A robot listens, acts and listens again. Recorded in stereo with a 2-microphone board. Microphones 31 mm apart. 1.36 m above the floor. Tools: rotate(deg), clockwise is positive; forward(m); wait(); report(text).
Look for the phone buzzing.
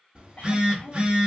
rotate(40)
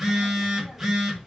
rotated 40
rotate(10)
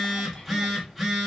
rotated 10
report("Facing the phone buzzing.")